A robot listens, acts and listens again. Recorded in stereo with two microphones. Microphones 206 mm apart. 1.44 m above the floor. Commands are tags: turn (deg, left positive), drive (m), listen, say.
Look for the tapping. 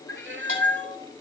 <listen/>
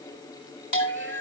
<listen/>
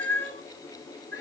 <say>I can't make out tapping to turn to.</say>